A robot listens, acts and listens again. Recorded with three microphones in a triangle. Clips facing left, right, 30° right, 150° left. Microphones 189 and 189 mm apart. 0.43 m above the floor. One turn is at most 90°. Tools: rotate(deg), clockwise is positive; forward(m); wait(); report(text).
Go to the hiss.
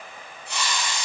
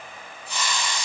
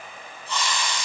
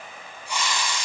rotate(-75)
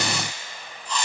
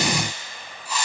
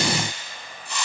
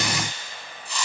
rotate(10)
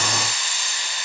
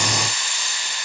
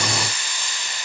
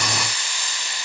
forward(1.0)
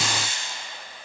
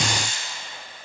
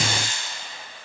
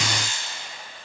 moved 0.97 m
forward(1.0)
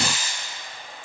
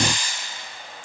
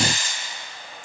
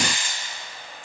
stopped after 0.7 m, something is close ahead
rotate(-10)
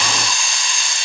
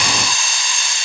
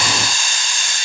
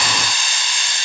report("Arrived at the hiss, straight ahead.")